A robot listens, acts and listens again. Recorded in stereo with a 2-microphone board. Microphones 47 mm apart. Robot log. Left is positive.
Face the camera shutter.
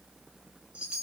cmd idle
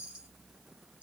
cmd idle
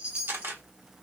note: The camera shutter: about 50° right or 130° right.
cmd yaw -50
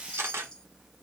note: So it is at 75° right.
cmd yaw -75
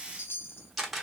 end: Found it: a camera shutter, straight ahead.